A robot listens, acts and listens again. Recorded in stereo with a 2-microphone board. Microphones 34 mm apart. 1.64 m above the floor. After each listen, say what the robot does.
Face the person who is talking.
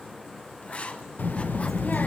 Turn 55° left.
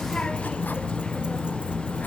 Turn 40° left.
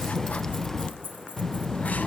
Turn 20° left.
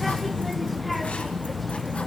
Facing the child speaking, under 1 m away.